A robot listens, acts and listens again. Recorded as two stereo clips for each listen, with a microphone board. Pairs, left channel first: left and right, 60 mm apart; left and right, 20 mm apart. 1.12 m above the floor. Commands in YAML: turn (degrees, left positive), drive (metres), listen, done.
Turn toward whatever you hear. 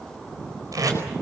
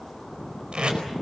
turn: -70
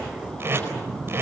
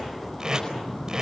turn: -40
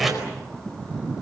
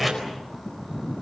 done: "Found it: tape being pulled, straight ahead, over 4 m away."